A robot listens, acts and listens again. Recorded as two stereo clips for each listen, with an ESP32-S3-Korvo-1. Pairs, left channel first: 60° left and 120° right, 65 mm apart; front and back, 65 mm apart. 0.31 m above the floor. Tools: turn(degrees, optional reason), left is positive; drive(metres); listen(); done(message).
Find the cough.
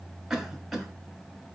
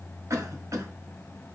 turn(degrees=155, reason="The cough: 155° left.")
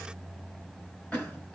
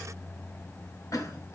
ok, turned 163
turn(degrees=-10, reason="The cough is now 10° right.")
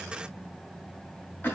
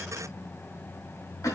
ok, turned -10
done("Facing the cough, 1 to 2 m away.")